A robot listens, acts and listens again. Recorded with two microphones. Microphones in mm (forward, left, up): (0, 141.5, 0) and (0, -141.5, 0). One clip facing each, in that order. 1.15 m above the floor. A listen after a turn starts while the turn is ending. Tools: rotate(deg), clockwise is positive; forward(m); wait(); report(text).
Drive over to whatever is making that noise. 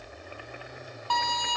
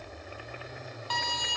rotate(-70)
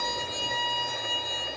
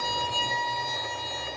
rotate(-10)
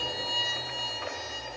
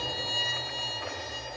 forward(1.0)
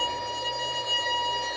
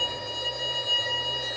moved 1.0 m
forward(1.0)
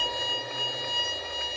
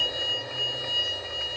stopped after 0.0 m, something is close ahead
report("Arrived at the violin, straight ahead.")